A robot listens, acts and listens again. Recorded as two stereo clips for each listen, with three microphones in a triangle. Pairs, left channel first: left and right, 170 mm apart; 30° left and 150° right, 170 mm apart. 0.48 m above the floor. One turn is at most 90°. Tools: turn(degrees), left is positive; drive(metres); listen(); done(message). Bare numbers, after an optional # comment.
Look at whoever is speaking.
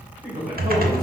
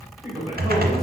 # The man speaking: 85° right.
turn(-85)
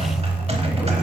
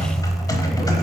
listen()
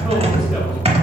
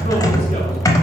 listen()
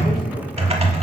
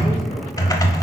done("I heard a man speaking from this way, but can't make it out now.")